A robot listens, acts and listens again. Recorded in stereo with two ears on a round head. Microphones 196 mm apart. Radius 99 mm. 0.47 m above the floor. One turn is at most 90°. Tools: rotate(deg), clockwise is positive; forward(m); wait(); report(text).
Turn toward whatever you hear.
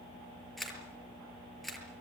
rotate(-30)
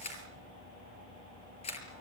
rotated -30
rotate(-90)
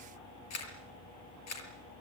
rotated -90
rotate(-75)
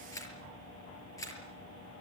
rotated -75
rotate(-15)
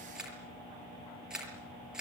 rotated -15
report("Facing the camera shutter, over 4 m away.")